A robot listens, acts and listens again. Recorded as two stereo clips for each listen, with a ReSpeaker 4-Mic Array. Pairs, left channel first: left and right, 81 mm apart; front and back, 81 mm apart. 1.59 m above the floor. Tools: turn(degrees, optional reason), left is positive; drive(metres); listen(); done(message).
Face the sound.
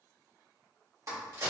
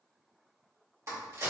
turn(degrees=-130, reason="The crack: 130° right.")
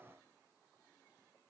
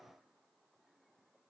done("Facing where the crack came from. I can't hear it now.")